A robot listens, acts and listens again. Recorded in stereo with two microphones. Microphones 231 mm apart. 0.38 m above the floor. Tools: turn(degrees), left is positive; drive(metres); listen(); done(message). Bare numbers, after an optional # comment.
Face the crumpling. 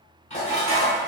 listen()
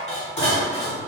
listen()
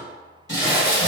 # The crumpling: about 50° left or 130° left.
turn(50)
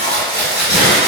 # So it is at 60° left.
turn(60)
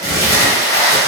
# The crumpling is now 15° left.
turn(15)
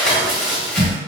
done("Found it: crumpling, straight ahead, 1 to 2 m away.")